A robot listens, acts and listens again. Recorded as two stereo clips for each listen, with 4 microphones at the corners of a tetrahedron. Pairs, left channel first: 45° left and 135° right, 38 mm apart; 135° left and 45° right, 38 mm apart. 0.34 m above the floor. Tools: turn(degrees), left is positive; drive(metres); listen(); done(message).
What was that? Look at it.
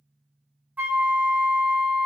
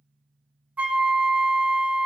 turn(degrees=-95)
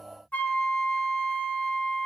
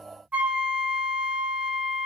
done("Facing the flute.")